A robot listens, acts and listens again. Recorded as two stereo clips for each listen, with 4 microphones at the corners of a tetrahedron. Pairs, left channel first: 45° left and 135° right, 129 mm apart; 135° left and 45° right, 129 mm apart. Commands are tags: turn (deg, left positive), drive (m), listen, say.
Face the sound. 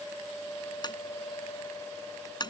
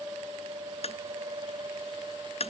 <turn deg="100"/>
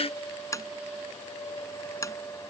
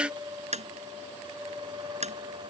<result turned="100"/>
<turn deg="-20"/>
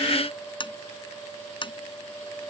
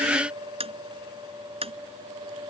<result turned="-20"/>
<say>Facing the tapping.</say>